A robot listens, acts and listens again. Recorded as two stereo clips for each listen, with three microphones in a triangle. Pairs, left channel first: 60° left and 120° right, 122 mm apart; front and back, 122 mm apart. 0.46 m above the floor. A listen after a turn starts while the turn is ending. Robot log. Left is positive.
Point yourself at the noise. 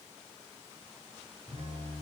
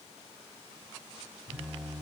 note: The phone buzzing: 100° right.
cmd yaw -100
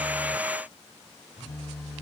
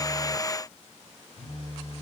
note: The phone buzzing is now 30° right.
cmd yaw -30
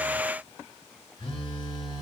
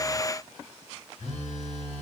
end: Found it: a phone buzzing, straight ahead, 1 to 2 m away.